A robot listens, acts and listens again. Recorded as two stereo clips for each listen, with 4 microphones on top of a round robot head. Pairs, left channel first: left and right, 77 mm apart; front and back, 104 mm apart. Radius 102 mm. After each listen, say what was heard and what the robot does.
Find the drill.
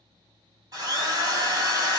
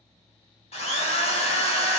The drill: 35° right. Turn 35° right.
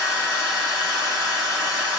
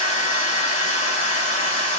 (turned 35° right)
The drill is now 10° right. Turn 10° right.
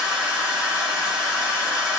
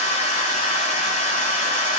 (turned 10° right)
Facing the drill, under 1 m away.